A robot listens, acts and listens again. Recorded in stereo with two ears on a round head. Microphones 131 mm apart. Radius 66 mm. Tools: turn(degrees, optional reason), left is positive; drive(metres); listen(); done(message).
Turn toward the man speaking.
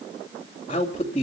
turn(degrees=40, reason="The man speaking: about 40° left or 140° left.")
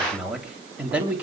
turn(degrees=-10, reason="So it is at 10° right.")
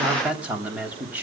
turn(degrees=-10, reason="The man speaking is now 10° right.")
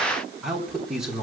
done("Found it: a man speaking, straight ahead.")